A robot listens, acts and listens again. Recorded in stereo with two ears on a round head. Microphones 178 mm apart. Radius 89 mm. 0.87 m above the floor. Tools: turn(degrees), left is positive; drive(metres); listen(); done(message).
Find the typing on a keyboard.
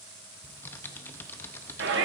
turn(degrees=30)
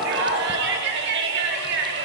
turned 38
listen()
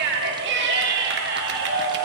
listen()
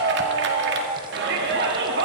done("I heard typing on a keyboard, but can't make it out now. It was about 25° right or 130° left.")